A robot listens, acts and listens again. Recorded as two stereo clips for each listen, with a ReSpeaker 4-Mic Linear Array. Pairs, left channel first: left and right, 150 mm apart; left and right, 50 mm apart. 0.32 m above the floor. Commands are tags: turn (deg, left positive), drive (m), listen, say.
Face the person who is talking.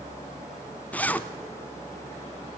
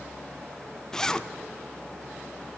<listen/>
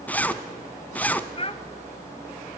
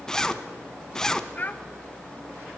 <turn deg="40"/>
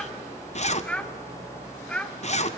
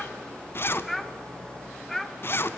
<turn deg="10"/>
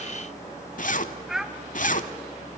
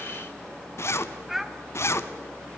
<say>Facing the child speaking.</say>